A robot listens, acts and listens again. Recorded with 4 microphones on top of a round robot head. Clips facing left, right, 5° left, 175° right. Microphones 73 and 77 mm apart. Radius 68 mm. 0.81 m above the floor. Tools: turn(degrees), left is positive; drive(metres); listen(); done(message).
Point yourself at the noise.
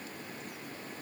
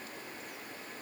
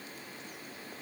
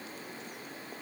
listen()
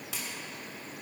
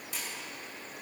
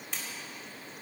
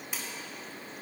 turn(degrees=100)
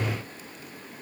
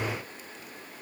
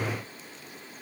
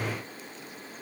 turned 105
done("Facing where the splash came from. I can't hear it now.")